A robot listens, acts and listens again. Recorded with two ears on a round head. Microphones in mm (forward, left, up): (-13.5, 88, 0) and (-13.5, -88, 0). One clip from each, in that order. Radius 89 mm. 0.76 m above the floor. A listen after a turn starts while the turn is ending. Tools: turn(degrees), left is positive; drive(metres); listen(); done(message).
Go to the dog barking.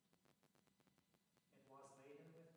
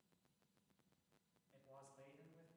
listen()
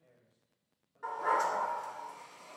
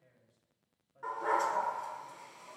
turn(degrees=-30)
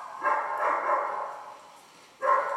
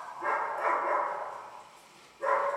turn(degrees=25)
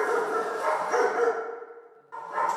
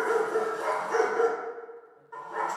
turn(degrees=15)
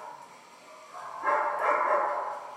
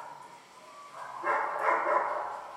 drive(metres=1.0)
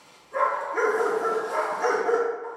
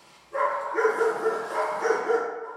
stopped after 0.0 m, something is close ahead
done("Something is in my way. I am facing the dog barking but have not reached it.")